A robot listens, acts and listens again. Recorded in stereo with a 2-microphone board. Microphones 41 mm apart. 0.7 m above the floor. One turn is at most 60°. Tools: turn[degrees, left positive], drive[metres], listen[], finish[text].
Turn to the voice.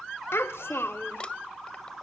Action: turn[60]
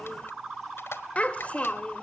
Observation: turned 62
Thought: So it is at 35° left.
Action: turn[35]
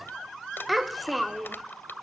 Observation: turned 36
Action: finish[Found it: a child speaking, straight ahead, 1 to 2 m away.]